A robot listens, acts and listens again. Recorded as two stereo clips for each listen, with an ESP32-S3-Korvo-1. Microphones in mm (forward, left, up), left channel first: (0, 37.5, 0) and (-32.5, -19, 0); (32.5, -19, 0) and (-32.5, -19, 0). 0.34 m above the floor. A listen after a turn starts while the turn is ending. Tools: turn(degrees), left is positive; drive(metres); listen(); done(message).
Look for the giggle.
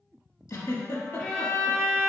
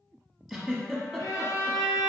turn(degrees=95)
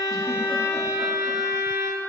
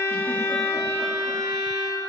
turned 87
turn(degrees=10)
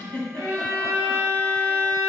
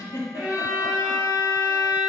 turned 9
done("Facing the giggle.")